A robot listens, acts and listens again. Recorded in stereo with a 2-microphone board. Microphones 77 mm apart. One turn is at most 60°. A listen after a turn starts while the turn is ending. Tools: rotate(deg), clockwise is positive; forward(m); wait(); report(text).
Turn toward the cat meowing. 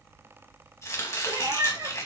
rotate(55)
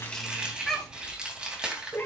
rotate(-25)
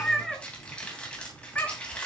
rotate(-30)
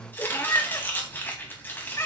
rotate(-40)
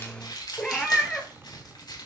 rotate(-10)
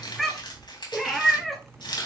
report("Found it: a cat meowing, straight ahead, 1 to 2 m away.")